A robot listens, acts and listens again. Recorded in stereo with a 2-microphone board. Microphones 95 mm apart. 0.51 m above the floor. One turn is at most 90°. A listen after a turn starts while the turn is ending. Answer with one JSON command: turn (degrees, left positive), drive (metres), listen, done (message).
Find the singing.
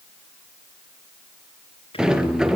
{"turn": 90}
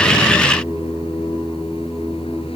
{"done": "Facing the singing, over 4 m away."}